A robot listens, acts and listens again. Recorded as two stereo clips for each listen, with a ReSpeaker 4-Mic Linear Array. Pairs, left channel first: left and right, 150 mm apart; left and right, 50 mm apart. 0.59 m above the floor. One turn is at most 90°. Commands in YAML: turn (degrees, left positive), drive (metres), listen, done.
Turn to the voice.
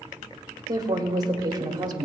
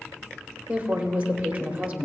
turn: -25
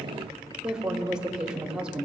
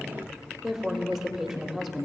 done: "Found it: a woman speaking, straight ahead, 1 to 2 m away."